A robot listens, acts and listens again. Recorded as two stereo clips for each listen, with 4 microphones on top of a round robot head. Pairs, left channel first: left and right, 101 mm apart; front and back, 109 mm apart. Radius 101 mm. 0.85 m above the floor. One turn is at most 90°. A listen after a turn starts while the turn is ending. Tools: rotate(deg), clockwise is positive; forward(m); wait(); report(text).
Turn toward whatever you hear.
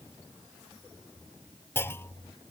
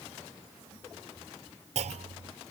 rotate(-90)
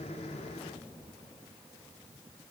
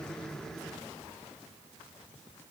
rotate(-70)
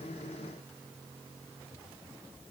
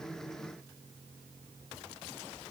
report("Facing where the clunk came from. I can't hear it now.")